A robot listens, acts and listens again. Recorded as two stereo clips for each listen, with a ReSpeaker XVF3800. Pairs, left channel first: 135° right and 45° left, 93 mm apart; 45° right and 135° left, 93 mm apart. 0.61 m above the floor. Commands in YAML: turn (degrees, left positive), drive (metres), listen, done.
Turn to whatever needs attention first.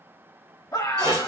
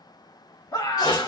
turn: -85
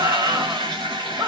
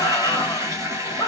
done: "Facing the scream, 1 to 2 m away."